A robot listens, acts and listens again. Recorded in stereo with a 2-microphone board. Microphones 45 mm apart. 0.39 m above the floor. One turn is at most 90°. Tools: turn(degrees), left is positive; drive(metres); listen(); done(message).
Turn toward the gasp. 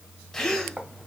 turn(degrees=30)
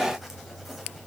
listen()
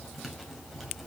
done("I heard a gasp, but can't make it out now. It was about 20° right or 140° left.")